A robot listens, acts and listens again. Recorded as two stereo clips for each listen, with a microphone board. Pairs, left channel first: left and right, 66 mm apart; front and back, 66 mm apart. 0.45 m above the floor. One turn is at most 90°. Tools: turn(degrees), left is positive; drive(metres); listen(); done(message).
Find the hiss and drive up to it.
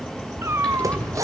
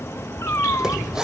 turn(degrees=-90)
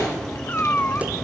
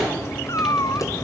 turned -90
turn(degrees=-10)
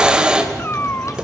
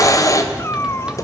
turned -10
turn(degrees=-15)
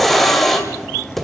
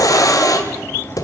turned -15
drive(metres=1.0)
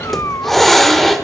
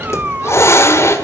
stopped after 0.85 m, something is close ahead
done("Arrived at the hiss, straight ahead.")